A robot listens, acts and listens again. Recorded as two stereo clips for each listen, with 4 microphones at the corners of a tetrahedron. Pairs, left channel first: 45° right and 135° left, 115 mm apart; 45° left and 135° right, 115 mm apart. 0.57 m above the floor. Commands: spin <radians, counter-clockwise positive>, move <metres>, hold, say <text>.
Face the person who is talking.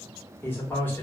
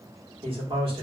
spin -1.92
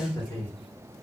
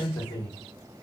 say Found it: a man speaking, straight ahead.